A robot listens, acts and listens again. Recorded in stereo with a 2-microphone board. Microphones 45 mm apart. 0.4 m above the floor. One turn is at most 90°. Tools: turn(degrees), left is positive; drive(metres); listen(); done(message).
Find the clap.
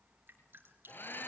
listen()
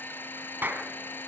turn(degrees=-45)
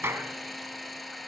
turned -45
turn(degrees=-80)
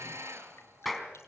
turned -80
done("Facing the clap, 2 to 4 m away.")